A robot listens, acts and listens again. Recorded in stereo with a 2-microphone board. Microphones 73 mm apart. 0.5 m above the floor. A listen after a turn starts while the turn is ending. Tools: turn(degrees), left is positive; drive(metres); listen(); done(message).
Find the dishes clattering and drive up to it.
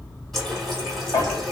turn(degrees=45)
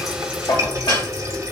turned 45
turn(degrees=90)
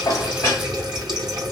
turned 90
listen()
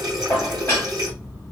turn(degrees=30)
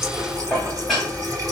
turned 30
drive(metres=1.0)
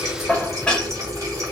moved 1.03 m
turn(degrees=15)
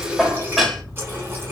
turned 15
drive(metres=1.0)
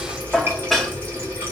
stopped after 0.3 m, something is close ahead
done("Arrived at the dishes clattering, straight ahead.")